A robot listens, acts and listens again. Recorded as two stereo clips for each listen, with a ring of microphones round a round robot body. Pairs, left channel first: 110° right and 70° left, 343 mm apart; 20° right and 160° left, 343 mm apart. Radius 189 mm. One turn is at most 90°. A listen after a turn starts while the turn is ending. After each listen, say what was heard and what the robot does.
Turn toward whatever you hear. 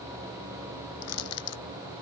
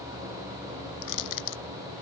The crushing: 60° right. Turn 60° right.
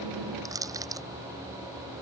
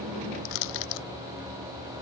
The crushing is now 15° right. Turn 15° right.
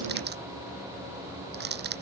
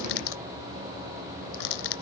Found it: crushing, straight ahead.